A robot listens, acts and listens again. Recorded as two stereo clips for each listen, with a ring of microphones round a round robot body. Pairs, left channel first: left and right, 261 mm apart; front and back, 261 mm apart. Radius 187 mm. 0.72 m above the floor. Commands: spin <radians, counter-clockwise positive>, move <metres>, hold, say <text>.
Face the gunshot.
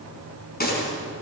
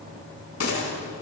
spin 0.61
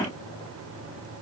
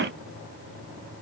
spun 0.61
say Facing where the gunshot came from. I can't hear it now.